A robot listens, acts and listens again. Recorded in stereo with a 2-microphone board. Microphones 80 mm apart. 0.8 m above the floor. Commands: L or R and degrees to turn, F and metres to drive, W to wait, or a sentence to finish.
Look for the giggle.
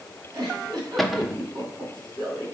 R60
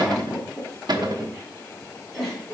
Facing the giggle.